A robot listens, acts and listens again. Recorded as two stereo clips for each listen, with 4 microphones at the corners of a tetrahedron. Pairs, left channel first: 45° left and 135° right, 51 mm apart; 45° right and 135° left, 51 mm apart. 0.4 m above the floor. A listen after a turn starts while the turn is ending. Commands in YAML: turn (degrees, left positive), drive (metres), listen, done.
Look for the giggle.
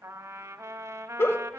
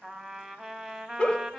turn: 20
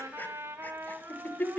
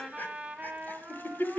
done: "Facing the giggle."